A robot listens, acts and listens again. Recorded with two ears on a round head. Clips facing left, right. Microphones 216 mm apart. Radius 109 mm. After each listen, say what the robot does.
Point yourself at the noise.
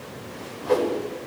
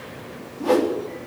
Turn 90° right.
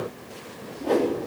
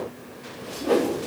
Found it: a whoosh, straight ahead, over 4 m away.